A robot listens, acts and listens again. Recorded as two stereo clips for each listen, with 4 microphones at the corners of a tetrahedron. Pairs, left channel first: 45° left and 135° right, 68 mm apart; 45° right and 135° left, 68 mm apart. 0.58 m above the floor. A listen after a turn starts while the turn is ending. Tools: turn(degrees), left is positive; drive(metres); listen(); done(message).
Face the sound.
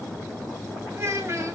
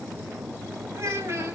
turn(degrees=180)
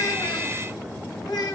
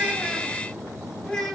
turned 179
turn(degrees=40)
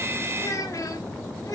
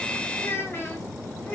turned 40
turn(degrees=15)
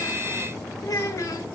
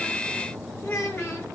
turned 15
done("Found it: a child speaking, straight ahead, 2 to 4 m away.")